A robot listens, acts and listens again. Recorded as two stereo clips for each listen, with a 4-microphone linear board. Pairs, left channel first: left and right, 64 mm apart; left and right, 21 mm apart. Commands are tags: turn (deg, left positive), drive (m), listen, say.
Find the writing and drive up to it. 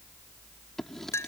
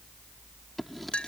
<turn deg="30"/>
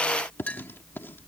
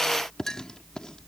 <turn deg="145"/>
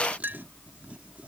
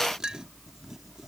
<turn deg="-20"/>
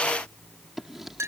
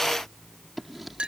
<drive m="1.0"/>
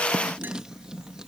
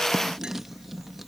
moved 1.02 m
<turn deg="-10"/>
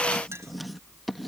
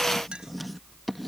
<drive m="1.0"/>
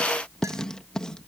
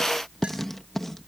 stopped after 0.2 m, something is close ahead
<turn deg="10"/>
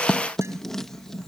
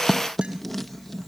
<say>I am next to the writing.</say>